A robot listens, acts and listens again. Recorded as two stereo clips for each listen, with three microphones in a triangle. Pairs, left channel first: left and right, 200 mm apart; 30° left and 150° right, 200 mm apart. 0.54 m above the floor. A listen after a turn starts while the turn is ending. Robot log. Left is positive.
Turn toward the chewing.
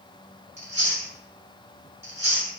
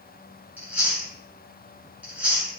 note: The chewing: 70° right.
cmd yaw -70
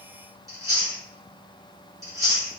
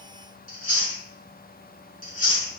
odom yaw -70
note: The chewing is now 20° right.
cmd yaw -20
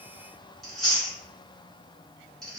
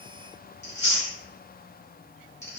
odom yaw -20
end: Facing the chewing, 1 to 2 m away.